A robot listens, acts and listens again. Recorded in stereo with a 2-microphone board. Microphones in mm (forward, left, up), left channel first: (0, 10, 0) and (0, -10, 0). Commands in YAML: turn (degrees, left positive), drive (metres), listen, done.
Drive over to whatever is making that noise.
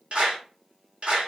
turn: -70
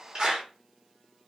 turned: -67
turn: -35
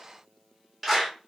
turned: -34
drive: 1.0
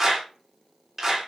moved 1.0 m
turn: -15
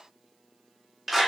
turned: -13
drive: 1.0
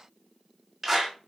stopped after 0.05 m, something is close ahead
done: "Arrived at the clap, straight ahead."